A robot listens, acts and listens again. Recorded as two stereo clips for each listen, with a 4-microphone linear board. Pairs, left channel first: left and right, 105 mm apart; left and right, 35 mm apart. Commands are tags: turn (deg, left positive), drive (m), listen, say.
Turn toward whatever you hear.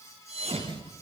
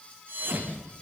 <turn deg="-75"/>
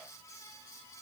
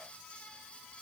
<listen/>
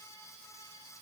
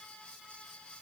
<say>I heard a thud, but can't make it out now. It was about straight ahead or 30° right.</say>